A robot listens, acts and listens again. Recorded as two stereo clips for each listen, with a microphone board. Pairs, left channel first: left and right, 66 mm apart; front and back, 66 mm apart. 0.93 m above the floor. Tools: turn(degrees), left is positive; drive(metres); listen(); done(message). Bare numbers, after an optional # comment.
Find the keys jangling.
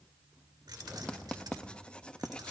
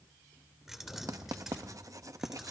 # The keys jangling: 95° right.
turn(-95)
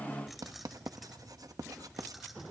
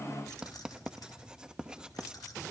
done("Facing the keys jangling.")